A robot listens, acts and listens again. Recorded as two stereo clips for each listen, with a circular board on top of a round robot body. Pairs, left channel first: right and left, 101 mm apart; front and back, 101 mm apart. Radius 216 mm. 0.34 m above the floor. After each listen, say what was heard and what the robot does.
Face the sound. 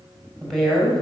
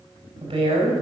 The woman speaking: 175° right. Turn 175° right.
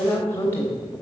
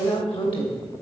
The woman speaking is now 25° right. Turn 25° right.
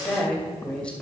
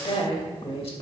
The woman speaking is now 10° right. Turn 10° right.
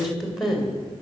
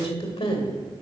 Facing the woman speaking, 2 to 4 m away.